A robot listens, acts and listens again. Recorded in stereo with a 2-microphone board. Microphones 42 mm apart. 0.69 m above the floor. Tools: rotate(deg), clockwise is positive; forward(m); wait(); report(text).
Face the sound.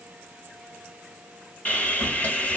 rotate(-45)
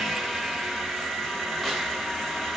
report("Found it: sawing, straight ahead, 1 to 2 m away.")